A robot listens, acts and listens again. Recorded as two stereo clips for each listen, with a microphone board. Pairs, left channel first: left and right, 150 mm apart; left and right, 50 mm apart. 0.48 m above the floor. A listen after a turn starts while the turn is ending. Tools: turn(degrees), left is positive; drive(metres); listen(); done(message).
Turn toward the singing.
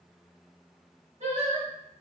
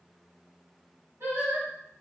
turn(degrees=-50)
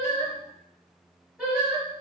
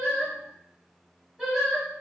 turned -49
done("Facing the singing.")